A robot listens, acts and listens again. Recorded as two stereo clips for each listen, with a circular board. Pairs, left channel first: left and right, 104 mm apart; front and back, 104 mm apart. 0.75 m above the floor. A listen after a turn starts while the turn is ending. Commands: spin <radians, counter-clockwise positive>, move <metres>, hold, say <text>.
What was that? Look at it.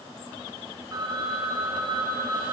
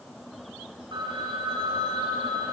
spin -2.44
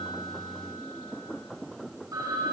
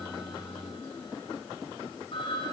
spin -0.61
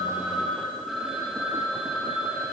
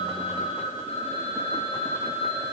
say Facing the phone ringing.